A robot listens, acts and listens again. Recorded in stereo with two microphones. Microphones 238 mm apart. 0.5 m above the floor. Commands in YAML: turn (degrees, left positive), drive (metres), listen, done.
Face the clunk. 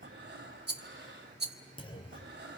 turn: 20
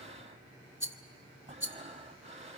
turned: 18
listen: true
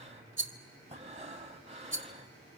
done: "I heard a clunk, but can't make it out now. It was about 5° left or 140° left."